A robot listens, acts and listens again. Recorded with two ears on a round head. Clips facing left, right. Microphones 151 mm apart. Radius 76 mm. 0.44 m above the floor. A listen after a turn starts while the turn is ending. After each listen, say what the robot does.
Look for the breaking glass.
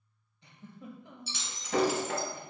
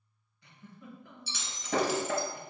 Turn 50° right.
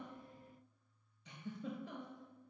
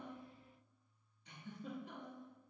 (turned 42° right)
Keep listening.
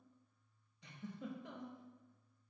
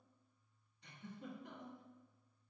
I heard breaking glass, but can't make it out now. It was about 5° right or 90° right.